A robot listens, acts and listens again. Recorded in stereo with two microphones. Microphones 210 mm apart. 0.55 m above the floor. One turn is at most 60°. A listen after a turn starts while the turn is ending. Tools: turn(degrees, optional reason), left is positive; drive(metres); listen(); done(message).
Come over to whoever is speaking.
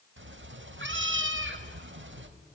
listen()
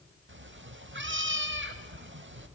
listen()
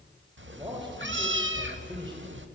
turn(degrees=-20, reason="The man speaking: about 20° right or 160° right.")
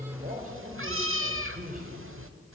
turn(degrees=-60, reason="So it is at 135° right.")
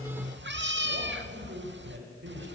turn(degrees=-60, reason="The man speaking is now 100° right.")
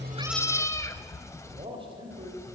turn(degrees=-25, reason="The man speaking is now 25° right.")
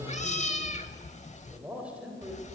drive(metres=1.0)
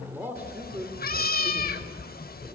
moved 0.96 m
turn(degrees=-10, reason="The man speaking is now 10° right.")
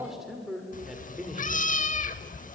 drive(metres=1.0)
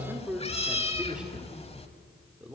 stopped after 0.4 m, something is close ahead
done("I am next to the man speaking.")